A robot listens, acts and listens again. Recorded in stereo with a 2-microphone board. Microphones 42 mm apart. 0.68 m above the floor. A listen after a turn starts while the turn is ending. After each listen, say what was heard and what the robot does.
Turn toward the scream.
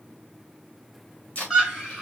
Turn 30° right.
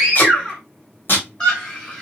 So it is at 25° left. Turn 25° left.
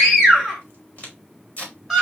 Facing the scream, 2 to 4 m away.